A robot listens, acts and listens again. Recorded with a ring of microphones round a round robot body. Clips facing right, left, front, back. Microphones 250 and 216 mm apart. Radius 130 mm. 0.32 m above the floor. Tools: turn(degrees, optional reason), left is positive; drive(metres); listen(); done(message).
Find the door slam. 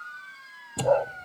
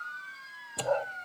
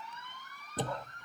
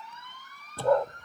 turn(degrees=-75, reason="The door slam: 75° right.")
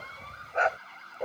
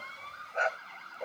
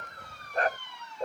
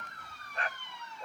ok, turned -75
done("Facing where the door slam came from. I can't hear it now.")